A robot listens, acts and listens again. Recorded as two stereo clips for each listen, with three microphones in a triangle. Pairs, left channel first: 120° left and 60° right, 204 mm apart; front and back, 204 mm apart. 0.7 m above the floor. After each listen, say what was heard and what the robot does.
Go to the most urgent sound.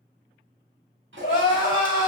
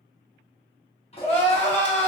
The crying: 85° left. Turn 85° left.
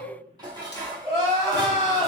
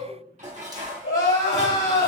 The crying is now 10° left. Turn 10° left.
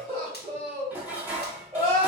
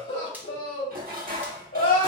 Drive 1.0 m forward.
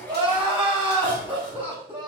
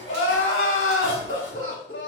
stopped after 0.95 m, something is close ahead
Arrived at the crying, straight ahead.